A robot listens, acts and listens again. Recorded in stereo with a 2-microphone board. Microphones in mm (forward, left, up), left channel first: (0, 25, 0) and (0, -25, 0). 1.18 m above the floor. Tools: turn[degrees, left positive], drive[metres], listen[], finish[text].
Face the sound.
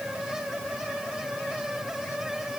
Action: listen[]
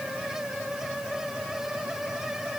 Action: listen[]
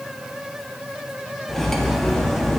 Action: turn[30]
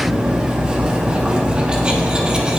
Thought: So it is at 25° right.
Action: turn[-25]
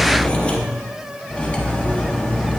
Thought: The cutlery clinking is now 25° left.
Action: turn[25]
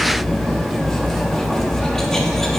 Thought: The cutlery clinking is now 10° left.
Action: turn[10]
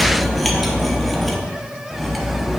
Action: finish[Facing the cutlery clinking.]